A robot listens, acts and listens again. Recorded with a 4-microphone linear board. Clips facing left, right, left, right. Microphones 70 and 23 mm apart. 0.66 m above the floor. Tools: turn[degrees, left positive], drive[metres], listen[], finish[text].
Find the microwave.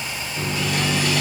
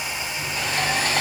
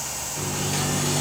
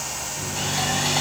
Thought: The microwave: about 65° left or 115° left.
Action: turn[65]
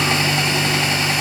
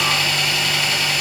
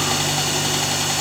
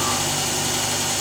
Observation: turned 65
Thought: So it is at 45° left.
Action: turn[45]
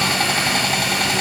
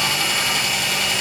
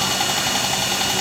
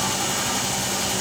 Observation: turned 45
Action: listen[]
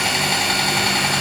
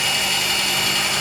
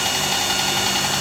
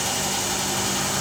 Action: listen[]
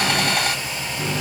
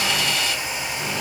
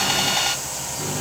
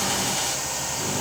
Thought: The microwave is now 20° left.
Action: turn[20]
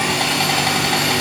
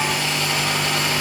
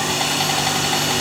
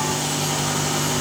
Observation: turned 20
Action: finish[Facing the microwave, 2 to 4 m away.]